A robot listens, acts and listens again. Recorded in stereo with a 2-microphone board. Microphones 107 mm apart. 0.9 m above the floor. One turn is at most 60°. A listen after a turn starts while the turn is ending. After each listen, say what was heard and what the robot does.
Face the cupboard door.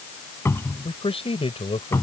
The cupboard door: about 25° left or 155° left. Turn 25° left.
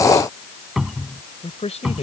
Found it: a cupboard door, straight ahead.